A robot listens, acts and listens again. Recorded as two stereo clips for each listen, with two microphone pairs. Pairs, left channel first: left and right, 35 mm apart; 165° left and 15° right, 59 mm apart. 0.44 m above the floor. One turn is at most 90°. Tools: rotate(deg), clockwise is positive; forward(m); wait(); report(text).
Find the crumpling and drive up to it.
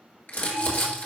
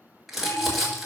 rotate(-65)
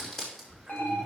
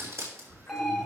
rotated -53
rotate(-15)
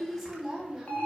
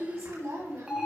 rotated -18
forward(1.0)
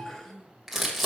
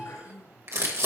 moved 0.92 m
forward(1.0)
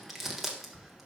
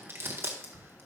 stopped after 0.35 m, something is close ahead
report("I am next to the crumpling.")